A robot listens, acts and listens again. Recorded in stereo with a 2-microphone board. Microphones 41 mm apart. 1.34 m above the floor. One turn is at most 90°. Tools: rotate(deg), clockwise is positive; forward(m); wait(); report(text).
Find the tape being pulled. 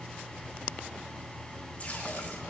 wait()
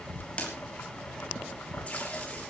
rotate(-30)
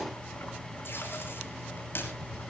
wait()
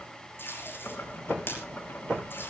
rotate(-90)
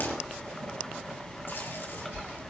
rotate(-30)
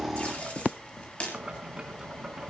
rotate(-30)
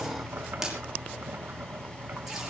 rotate(10)
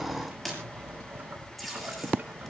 report("Facing the tape being pulled.")